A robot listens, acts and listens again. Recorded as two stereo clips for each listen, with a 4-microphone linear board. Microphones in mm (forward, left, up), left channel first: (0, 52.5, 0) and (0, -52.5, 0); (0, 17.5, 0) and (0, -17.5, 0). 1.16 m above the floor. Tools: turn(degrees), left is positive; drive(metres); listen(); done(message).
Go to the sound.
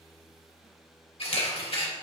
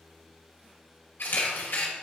turn(degrees=65)
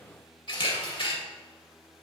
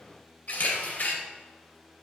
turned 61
turn(degrees=55)
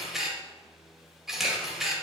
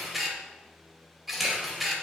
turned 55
drive(metres=1.0)
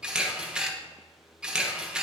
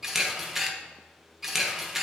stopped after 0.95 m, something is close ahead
turn(degrees=-10)
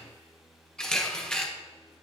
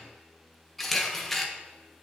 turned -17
turn(degrees=10)
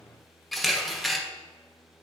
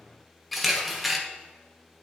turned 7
done("I am next to the camera shutter.")